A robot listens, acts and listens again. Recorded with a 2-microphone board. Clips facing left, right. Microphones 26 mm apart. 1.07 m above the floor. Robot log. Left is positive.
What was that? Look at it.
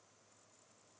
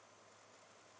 cmd idle
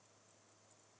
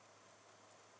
cmd idle
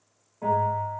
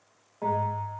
note: The bell: about 25° right or 155° right.
cmd yaw -25
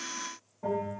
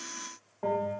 note: So it is at 125° right.
cmd yaw -125
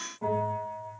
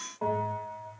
note: The bell is now 45° right.
cmd yaw -45
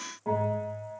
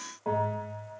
note: The bell is now 15° right.
cmd yaw -15
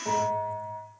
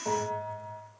end: Facing the bell, 1 to 2 m away.